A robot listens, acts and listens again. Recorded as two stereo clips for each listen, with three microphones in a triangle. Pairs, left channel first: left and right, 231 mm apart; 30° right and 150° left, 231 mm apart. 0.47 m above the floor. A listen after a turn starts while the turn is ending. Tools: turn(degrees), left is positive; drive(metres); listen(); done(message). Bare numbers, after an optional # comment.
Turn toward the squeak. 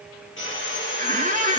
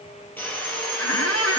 # The squeak: 30° right.
turn(-30)
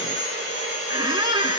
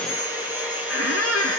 # The squeak is now 15° right.
turn(-15)
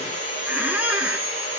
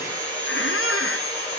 done("Found it: a squeak, straight ahead.")